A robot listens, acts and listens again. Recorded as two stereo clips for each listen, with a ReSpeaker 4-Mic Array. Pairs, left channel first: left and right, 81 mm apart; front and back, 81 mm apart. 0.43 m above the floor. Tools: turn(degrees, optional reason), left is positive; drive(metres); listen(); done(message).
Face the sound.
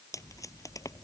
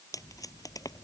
turn(degrees=45, reason="The tape being pulled: 45° left.")
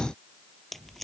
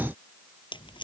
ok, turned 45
done("Found it: tape being pulled, straight ahead.")